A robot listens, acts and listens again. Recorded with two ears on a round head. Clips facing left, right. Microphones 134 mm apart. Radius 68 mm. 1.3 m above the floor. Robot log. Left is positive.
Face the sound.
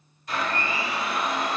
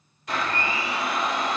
note: The blender: about 55° right or 125° right.
cmd yaw -55
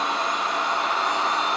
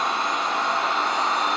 note: So it is at 70° right.
cmd yaw -70
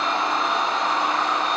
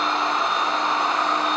end: Facing the blender.